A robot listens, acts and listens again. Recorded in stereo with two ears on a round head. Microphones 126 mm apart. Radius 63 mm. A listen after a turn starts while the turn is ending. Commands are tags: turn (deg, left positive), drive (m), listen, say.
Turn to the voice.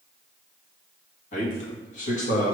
<turn deg="60"/>
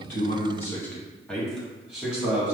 <turn deg="-10"/>
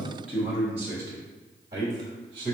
<turn deg="-30"/>
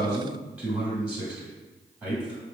<turn deg="-10"/>
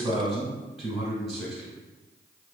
<say>Found it: a man speaking, straight ahead, 1 to 2 m away.</say>